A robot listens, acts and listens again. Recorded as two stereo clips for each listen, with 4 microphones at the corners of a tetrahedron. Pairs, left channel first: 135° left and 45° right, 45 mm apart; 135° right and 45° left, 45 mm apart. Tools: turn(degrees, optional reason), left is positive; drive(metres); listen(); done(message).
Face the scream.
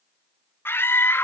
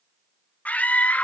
turn(degrees=170, reason="The scream: 170° left.")
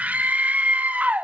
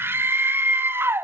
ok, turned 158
turn(degrees=10, reason="The scream is now 10° left.")
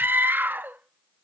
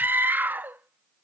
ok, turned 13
done("Facing the scream.")